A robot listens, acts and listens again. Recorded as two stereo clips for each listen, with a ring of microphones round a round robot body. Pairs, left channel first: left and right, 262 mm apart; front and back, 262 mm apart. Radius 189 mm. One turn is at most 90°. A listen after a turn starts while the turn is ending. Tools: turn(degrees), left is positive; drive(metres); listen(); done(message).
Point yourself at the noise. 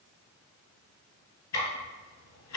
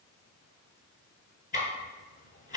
turn(degrees=65)
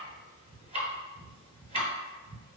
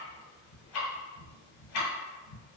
turn(degrees=-25)
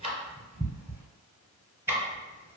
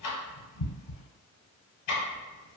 turn(degrees=-10)
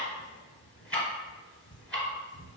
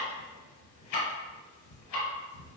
done("Facing the ticking.")